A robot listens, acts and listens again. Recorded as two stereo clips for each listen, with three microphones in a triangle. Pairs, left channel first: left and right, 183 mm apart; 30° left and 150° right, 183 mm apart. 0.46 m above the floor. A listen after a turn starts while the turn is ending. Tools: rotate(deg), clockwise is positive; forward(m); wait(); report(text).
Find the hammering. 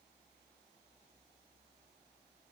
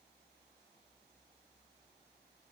wait()
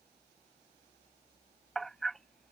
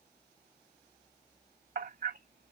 rotate(-180)
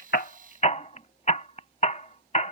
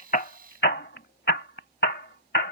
rotate(-45)
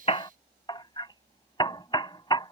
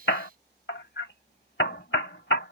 rotate(-30)
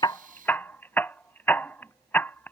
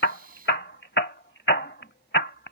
rotate(-10)
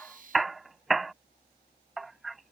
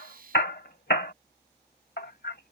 report("Facing the hammering.")